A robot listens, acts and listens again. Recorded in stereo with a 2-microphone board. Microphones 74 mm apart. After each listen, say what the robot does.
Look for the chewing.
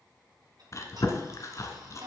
Turn 45° left.
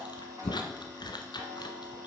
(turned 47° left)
Turn 90° left.
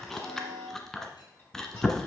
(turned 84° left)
Facing the chewing.